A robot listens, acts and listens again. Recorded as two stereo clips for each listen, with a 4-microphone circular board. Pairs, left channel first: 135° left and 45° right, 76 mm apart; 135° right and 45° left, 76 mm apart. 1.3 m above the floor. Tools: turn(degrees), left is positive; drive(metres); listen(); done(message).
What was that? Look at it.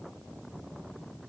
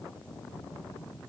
listen()
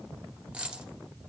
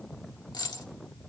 turn(degrees=-120)
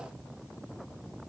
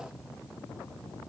done("I heard a dropped coin from this way, but can't make it out now.")